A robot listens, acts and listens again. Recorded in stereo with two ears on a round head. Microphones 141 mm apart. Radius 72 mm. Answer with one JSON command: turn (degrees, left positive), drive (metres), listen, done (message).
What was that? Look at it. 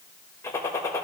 {"turn": 20}
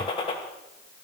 {"turn": 140}
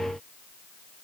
{"done": "Facing where the gunshot came from. I can't hear it now."}